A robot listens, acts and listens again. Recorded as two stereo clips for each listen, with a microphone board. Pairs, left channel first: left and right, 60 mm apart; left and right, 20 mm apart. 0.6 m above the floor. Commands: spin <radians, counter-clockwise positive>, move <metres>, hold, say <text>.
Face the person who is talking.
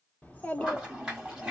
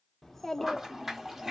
spin 0.44
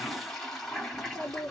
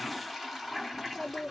spin 2.27
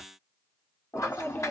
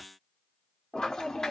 spin 0.61
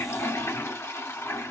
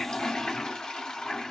hold
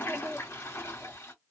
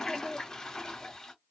spin 0.35
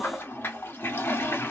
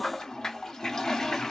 hold
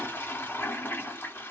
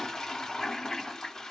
hold
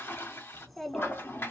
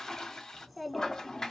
say Found it: a child speaking, straight ahead, 1 to 2 m away.